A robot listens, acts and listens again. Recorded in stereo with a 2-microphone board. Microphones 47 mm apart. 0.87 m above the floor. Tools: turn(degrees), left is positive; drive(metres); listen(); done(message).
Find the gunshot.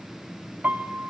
listen()
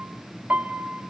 listen()
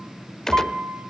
turn(degrees=30)
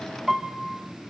listen()
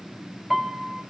done("I heard a gunshot, but can't make it out now. It was about 20° right or 140° left.")